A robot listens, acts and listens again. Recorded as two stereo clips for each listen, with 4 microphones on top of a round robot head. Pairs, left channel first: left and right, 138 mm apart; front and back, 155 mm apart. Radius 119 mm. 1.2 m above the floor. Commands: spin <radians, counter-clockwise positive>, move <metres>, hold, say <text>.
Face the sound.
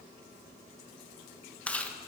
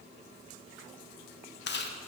spin 0.17
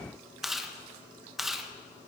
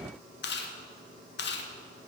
say Facing the chewing, 1 to 2 m away.